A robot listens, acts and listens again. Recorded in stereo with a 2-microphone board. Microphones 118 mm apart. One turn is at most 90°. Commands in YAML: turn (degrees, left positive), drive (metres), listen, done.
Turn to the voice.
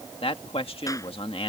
turn: 55
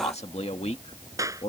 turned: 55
turn: 70
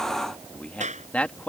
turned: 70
turn: 10
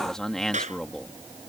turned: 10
done: "Facing the man speaking."